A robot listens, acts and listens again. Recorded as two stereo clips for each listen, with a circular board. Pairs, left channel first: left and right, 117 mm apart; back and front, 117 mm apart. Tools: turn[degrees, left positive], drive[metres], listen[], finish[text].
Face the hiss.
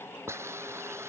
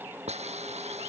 Thought: The hiss: 20° right.
Action: turn[-20]
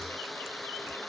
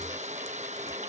Action: finish[Facing the hiss.]